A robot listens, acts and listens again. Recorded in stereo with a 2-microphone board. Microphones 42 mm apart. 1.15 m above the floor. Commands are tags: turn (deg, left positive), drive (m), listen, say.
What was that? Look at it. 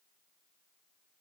<listen/>
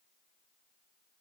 <listen/>
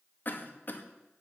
<turn deg="50"/>
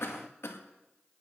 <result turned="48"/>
<turn deg="80"/>
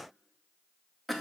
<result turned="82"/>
<say>Facing the cough.</say>